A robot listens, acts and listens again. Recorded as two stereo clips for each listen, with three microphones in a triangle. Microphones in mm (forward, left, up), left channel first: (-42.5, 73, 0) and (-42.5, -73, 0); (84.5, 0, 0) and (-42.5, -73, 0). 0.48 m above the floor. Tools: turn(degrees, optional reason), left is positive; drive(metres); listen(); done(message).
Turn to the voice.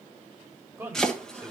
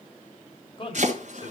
turn(degrees=-20, reason="The man speaking: 20° right.")
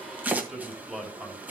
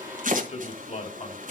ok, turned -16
done("Found it: a man speaking, straight ahead, 2 to 4 m away.")